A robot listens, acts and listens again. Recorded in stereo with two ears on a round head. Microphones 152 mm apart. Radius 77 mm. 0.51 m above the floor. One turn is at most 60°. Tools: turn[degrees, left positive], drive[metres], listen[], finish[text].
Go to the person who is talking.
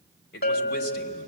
Thought: The man speaking: about 65° left or 115° left.
Action: turn[60]
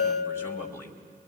Thought: So it is at 15° left.
Action: turn[15]
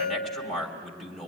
Action: drive[1.0]
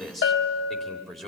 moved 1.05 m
Action: drive[1.0]
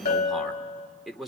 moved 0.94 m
Action: drive[1.0]
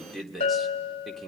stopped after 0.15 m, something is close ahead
Action: finish[Arrived at the man speaking, straight ahead.]